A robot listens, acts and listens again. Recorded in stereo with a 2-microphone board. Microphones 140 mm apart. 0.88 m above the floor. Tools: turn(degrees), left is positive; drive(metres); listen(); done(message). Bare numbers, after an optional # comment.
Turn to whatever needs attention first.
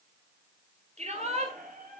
# The shout: about 55° right or 125° right.
turn(-55)
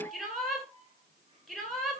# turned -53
done("Found it: a shout, straight ahead, over 4 m away.")